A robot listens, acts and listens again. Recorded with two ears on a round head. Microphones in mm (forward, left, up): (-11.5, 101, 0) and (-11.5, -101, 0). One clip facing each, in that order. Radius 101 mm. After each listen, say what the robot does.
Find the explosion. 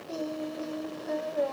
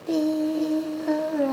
Keep listening.
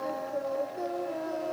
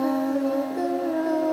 Keep listening.
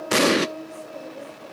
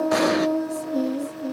Turn 35° left.
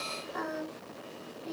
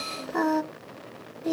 Keep listening.
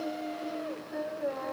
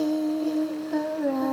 I heard an explosion, but can't make it out now. It was about straight ahead or 110° left.